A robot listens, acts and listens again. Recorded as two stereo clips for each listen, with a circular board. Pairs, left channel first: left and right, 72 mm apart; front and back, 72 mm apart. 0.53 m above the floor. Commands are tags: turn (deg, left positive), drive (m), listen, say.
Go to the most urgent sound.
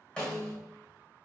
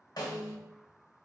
<listen/>
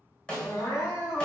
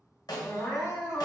<turn deg="55"/>
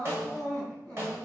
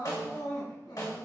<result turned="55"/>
<drive m="1.0"/>
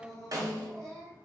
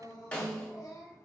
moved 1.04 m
<turn deg="10"/>
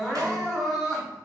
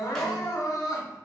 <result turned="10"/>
<drive m="1.0"/>
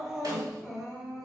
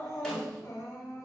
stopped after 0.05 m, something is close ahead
<say>I am next to the crying.</say>